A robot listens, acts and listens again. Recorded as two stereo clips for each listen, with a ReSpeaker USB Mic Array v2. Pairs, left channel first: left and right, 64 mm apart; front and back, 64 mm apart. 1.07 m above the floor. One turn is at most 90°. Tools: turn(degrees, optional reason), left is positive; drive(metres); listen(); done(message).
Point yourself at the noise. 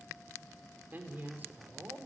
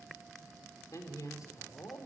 turn(degrees=-35, reason="The man speaking: 35° right.")
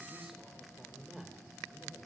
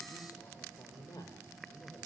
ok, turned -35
done("Found it: a man speaking, straight ahead.")